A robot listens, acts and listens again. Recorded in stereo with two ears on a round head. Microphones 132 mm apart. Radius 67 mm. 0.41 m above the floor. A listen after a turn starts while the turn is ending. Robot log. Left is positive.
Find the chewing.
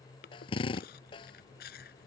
note: The chewing: about 70° left or 110° left.
cmd yaw +70
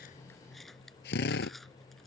end: Found it: chewing, straight ahead.